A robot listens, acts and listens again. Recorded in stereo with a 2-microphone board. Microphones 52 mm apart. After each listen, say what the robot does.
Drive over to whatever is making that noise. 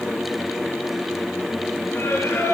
Turn 55° left.
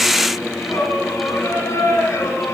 Turn 65° left.
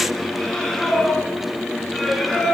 Drive 1.0 m forward.
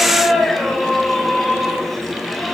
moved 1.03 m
Drive 1.0 m forward.
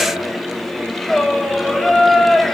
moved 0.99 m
Drive 1.0 m forward.
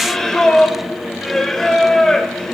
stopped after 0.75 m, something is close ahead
Turn 10° left.
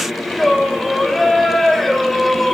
I am next to the singing.